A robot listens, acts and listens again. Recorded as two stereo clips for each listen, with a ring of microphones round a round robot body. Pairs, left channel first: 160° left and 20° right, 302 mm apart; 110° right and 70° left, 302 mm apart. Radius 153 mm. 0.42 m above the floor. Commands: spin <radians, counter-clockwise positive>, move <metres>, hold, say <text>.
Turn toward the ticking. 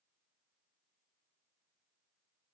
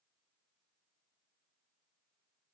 hold
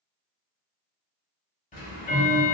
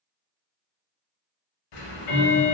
spin -2.36
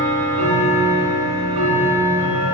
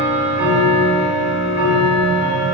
spin -0.26
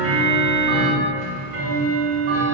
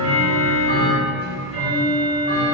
say Found it: ticking, straight ahead.